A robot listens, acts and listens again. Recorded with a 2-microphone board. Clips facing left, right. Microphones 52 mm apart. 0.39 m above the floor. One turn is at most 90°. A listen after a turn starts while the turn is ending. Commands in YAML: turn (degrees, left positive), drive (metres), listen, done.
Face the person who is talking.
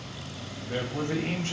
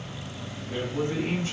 turn: 60
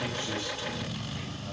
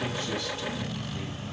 listen: true
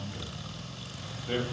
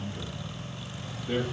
turn: 30
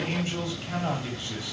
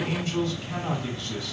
turn: 20
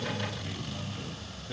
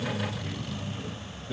turn: 10
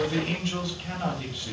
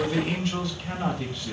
done: "Facing the man speaking, 1 to 2 m away."